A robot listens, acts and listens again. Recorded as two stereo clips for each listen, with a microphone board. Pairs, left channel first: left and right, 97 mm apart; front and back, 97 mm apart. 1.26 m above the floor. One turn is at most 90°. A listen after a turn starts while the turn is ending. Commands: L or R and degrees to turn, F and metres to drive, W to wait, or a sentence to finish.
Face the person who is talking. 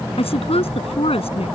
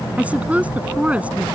L90
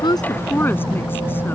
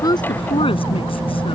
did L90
L15
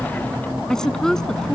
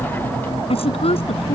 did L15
Found it: a woman speaking, straight ahead.